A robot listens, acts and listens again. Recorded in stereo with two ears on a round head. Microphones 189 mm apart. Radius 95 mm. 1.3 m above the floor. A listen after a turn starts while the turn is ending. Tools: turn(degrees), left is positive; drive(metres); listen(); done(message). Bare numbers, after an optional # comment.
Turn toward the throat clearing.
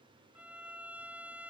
listen()
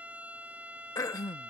# The throat clearing: about 15° left or 165° left.
turn(15)
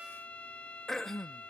done("Facing the throat clearing.")